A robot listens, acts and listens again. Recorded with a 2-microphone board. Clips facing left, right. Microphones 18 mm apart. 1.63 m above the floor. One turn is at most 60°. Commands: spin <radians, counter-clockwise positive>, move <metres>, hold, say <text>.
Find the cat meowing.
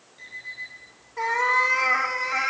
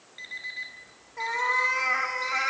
spin 0.52
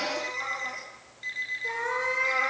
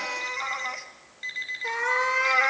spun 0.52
spin -0.96
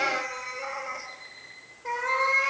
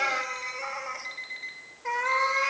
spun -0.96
spin -0.44
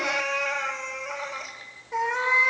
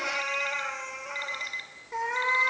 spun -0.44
say Found it: a cat meowing, straight ahead.